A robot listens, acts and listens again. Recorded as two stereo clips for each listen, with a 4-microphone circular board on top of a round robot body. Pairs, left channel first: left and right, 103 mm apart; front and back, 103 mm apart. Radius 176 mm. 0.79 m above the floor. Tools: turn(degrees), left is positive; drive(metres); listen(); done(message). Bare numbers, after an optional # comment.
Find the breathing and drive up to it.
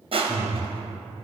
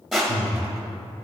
drive(1.0)
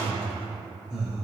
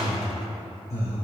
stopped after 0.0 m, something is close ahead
done("Something is in my way. I am facing the breathing but have not reached it.")